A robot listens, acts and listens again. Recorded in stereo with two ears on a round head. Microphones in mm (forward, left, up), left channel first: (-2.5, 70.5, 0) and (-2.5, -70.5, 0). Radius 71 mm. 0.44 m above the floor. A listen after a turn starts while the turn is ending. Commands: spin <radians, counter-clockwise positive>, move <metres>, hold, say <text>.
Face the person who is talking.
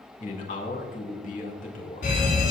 spin 0.96
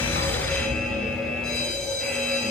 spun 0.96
hold
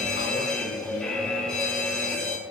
hold
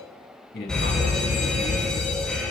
spin 1.22
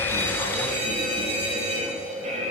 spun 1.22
hold
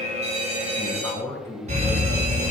spin 0.35
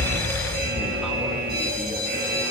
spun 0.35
hold
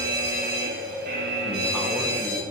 hold
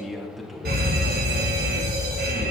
say Facing the man speaking.